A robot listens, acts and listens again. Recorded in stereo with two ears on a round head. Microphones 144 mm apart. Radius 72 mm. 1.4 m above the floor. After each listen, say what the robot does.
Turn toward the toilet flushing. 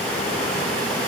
Keep listening.
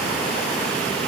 Keep listening.
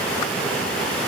I can't make out a toilet flushing to turn to.